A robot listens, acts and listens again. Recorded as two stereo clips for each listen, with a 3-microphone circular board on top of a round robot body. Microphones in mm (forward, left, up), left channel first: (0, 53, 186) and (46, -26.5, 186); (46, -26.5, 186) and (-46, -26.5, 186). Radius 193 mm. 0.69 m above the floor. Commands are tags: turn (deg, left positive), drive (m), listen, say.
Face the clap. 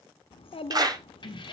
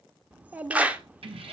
<turn deg="-105"/>
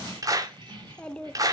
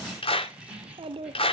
<turn deg="-10"/>
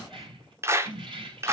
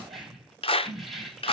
<say>Found it: a clap, straight ahead, 2 to 4 m away.</say>